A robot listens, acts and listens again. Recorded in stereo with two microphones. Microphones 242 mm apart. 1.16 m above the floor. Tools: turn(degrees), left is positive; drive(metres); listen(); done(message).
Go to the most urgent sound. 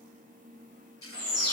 turn(degrees=-50)
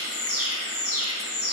turn(degrees=-80)
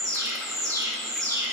turn(degrees=-15)
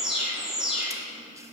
drive(metres=1.0)
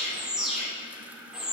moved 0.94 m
drive(metres=1.0)
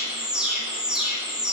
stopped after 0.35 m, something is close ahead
done("Blocked. The alarm is further on, straight ahead.")